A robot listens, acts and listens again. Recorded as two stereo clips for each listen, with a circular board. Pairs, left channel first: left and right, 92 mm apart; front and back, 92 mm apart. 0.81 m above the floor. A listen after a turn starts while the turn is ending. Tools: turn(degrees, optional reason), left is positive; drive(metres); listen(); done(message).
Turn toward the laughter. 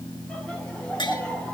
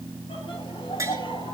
turn(degrees=15, reason="The laughter: 15° left.")
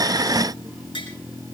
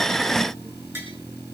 listen()
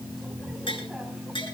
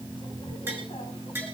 listen()
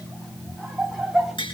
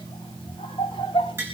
done("Found it: laughter, straight ahead, 2 to 4 m away.")